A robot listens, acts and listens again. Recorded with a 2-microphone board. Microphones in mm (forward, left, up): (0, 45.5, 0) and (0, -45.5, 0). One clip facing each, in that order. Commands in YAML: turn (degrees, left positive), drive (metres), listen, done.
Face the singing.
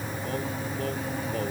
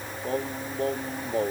turn: -30
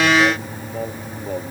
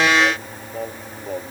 done: "Found it: singing, straight ahead."